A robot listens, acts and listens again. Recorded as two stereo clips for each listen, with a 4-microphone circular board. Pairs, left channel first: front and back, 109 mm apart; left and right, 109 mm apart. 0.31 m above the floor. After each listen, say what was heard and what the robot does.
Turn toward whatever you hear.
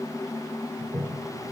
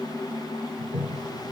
The toilet flushing: 110° right. Turn 110° right.
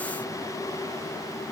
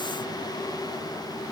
Keep listening.
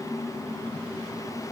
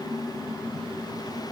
Keep listening.
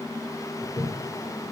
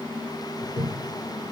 The toilet flushing is now 15° right. Turn 15° right.
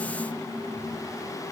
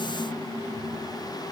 Keep listening.
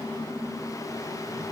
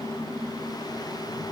Keep listening.
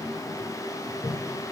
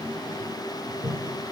Found it: a toilet flushing, straight ahead.